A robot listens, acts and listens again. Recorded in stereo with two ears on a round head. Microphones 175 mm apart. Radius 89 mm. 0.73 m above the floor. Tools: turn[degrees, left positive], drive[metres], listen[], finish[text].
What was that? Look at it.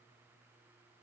Action: listen[]
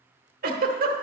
Thought: The giggle: about 50° right or 130° right.
Action: turn[-50]
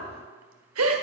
Thought: So it is at 80° right.
Action: turn[-80]
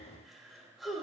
Action: finish[Found it: a giggle, straight ahead.]